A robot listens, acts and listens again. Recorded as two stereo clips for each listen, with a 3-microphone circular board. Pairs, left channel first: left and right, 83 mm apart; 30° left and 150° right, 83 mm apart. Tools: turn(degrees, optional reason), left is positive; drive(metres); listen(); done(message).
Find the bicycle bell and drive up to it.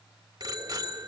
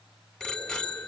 turn(degrees=-55, reason="The bicycle bell: 55° right.")
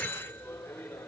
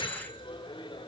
turn(degrees=20, reason="The bicycle bell is now 20° left.")
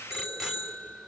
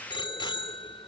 drive(metres=1.0)
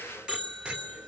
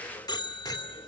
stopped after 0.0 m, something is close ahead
turn(degrees=-10, reason="The bicycle bell is now 10° right.")
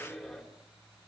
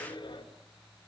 done("Something is in my way. I am facing the bicycle bell but have not reached it.")